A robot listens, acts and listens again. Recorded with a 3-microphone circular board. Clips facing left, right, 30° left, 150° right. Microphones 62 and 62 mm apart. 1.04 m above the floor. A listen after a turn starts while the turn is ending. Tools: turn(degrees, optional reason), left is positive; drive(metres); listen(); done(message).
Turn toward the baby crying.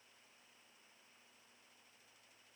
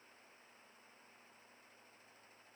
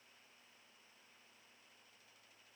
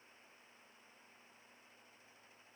listen()
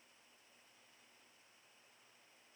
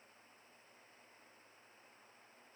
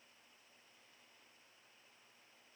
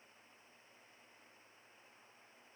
listen()
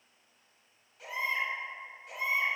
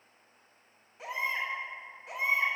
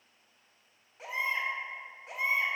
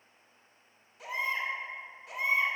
turn(degrees=-25, reason="The baby crying: 25° right.")
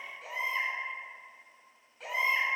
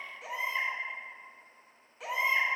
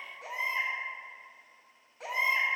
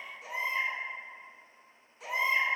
done("Facing the baby crying, 2 to 4 m away.")